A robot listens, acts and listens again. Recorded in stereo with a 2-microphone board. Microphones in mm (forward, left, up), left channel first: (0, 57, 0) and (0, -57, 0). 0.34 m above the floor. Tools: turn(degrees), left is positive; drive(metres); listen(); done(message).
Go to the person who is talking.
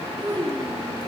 turn(degrees=-50)
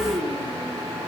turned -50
turn(degrees=-75)
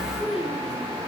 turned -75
drive(metres=1.0)
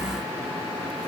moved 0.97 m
listen()
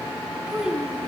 turn(degrees=-10)
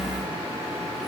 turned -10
listen()
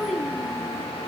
drive(metres=1.0)
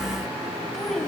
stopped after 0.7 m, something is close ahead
done("Arrived at the child speaking, straight ahead.")